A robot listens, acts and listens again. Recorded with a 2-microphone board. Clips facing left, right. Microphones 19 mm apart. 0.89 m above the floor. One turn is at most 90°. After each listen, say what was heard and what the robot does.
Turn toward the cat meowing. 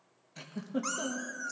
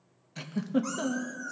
The cat meowing: about 55° left or 125° left. Turn 55° left.
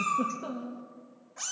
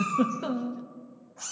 So it is at 45° left. Turn 45° left.
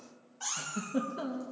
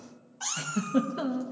The cat meowing is now 25° right. Turn 25° right.
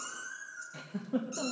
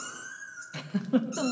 Facing the cat meowing, 2 to 4 m away.